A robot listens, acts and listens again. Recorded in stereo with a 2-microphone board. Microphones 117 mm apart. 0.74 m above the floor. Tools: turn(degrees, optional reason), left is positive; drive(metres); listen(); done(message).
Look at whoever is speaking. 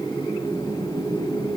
listen()
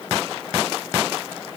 listen()
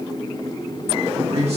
turn(degrees=-60, reason="The man speaking: about 60° right or 120° right.")
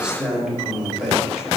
done("Facing the man speaking, 1 to 2 m away.")